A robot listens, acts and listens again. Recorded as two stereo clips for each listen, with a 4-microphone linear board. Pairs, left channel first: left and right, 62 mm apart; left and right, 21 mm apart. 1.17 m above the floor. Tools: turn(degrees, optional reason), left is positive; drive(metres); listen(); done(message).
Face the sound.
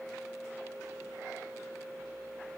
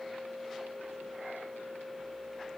listen()
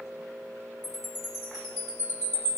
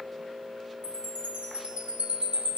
turn(degrees=-90)
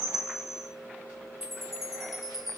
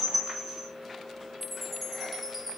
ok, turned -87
done("Found it: a chime, straight ahead.")